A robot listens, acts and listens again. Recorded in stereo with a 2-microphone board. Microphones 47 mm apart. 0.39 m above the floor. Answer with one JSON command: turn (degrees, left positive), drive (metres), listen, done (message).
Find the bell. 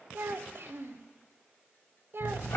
{"listen": true}
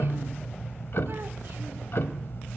{"listen": true}
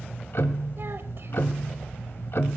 {"done": "I can't make out a bell to turn to."}